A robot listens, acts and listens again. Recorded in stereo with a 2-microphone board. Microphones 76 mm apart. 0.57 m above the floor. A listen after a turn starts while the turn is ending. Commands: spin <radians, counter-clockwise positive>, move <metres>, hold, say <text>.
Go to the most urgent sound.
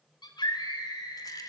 spin 1.22
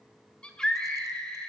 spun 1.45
spin 0.17
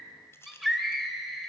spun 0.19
move 1.0
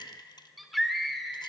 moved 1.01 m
move 1.0
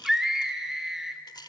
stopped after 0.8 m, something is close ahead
say Arrived at the scream, straight ahead.